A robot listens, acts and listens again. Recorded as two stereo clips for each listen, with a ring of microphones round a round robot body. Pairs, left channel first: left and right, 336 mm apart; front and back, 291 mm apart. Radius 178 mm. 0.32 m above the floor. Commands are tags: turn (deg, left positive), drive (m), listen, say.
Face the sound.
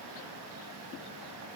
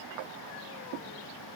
<listen/>
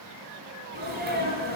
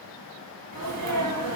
<turn deg="-150"/>
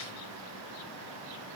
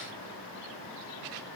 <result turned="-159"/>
<turn deg="10"/>
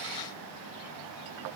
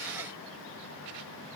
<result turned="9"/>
<say>I heard a sneeze from this way, but can't make it out now.</say>